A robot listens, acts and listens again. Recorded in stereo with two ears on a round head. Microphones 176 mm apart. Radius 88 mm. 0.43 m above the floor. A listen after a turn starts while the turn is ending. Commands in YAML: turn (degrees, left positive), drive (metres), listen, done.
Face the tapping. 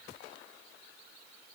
listen: true
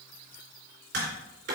turn: -65
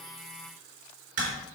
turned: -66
turn: -50
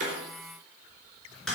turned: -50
done: "Found it: tapping, straight ahead, 2 to 4 m away."